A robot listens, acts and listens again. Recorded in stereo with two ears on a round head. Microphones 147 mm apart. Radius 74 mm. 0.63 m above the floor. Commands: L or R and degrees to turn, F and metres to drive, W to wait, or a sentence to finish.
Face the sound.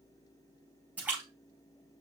R30
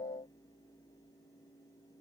W
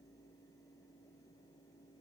I heard a splash, but can't make it out now. It was about 20° left or 140° right.